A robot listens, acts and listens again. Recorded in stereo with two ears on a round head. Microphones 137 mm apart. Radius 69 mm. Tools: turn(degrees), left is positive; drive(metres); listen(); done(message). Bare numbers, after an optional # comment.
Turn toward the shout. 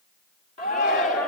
# The shout: about 55° left or 125° left.
turn(55)
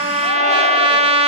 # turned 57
listen()
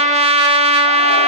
listen()
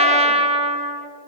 done("I heard a shout, but can't make it out now. It was about straight ahead or 70° left.")